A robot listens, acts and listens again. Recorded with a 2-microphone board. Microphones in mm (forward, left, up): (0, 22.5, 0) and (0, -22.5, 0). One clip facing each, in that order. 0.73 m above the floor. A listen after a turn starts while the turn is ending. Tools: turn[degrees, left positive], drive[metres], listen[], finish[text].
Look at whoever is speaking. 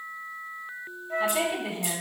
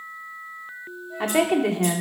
Thought: The woman speaking: about 70° right or 110° right.
Action: turn[-70]
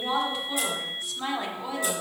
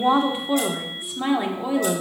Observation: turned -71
Thought: So it is at 20° right.
Action: turn[-20]
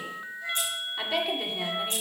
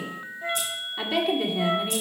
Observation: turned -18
Action: finish[Found it: a woman speaking, straight ahead.]